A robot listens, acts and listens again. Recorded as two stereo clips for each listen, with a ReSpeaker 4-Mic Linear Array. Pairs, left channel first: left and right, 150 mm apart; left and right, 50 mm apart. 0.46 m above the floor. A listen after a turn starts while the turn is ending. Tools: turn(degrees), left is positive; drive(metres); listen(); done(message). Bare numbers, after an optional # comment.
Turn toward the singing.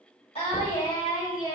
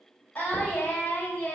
# The singing: about 30° left or 150° left.
turn(30)
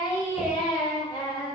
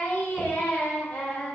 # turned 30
# The singing: about 30° left or 150° left.
turn(30)
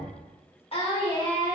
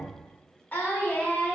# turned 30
# The singing: about 30° left or 150° left.
turn(30)
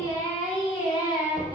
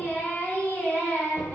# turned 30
# The singing: about 30° left or 150° left.
turn(30)
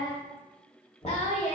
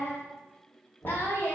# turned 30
# So it is at 135° left.
turn(135)
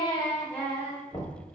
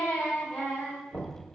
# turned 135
# The singing is now 10° left.
turn(10)
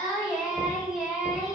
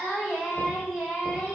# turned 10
done("Found it: singing, straight ahead, 1 to 2 m away.")